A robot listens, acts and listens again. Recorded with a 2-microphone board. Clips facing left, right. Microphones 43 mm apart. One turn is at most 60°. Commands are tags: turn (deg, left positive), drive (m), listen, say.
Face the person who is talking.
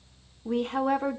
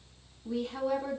<turn deg="45"/>
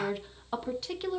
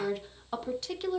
<say>Facing the woman speaking, under 1 m away.</say>